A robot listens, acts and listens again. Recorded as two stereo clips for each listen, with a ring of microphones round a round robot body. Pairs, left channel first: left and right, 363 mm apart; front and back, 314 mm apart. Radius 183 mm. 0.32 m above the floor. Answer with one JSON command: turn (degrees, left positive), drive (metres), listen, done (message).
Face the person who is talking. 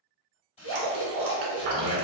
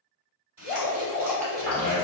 {"turn": -155}
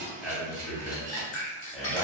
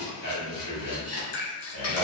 {"done": "Facing the man speaking."}